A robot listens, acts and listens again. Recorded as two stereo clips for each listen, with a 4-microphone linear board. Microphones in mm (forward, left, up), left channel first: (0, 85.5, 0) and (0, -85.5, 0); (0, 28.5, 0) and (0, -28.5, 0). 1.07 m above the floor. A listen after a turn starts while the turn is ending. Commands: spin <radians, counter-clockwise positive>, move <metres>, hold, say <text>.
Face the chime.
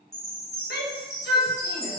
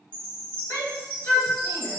spin 0.35
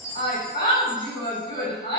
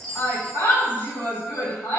hold
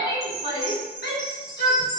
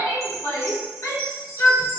say Facing the chime.